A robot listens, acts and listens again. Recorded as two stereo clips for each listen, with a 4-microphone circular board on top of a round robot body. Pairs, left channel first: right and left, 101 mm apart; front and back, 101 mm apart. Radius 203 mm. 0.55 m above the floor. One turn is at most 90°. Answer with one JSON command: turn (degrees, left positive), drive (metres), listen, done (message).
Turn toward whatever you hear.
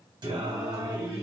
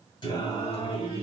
{"turn": 30}
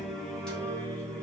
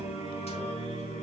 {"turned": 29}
{"turn": -15}
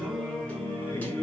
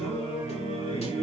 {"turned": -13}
{"turn": -20}
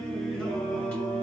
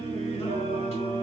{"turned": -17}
{"turn": -15}
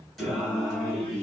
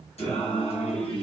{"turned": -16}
{"turn": -10}
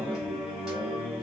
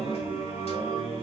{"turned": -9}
{"done": "Facing the singing."}